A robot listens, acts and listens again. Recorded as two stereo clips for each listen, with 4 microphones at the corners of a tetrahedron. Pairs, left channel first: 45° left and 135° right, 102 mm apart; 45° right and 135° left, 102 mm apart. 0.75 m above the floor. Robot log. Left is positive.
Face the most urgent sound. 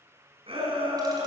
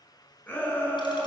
note: The shout: 115° right.
cmd yaw -115
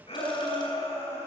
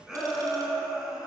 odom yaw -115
note: The shout is now 50° left.
cmd yaw +50
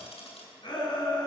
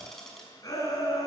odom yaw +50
note: The shout is now 10° left.
cmd yaw +10
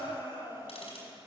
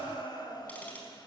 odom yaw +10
end: Facing the shout, over 4 m away.